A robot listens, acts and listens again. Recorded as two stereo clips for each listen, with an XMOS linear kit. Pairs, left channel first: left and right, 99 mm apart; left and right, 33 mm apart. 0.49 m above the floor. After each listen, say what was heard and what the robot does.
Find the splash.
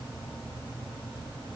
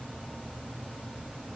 Keep listening.
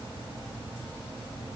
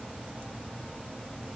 Keep listening.
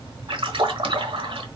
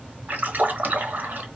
The splash: about 65° right or 115° right. Turn 65° right.
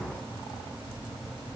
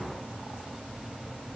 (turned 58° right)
Keep listening.
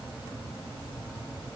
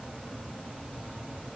I heard a splash, but can't make it out now. It was about 5° right or 55° right.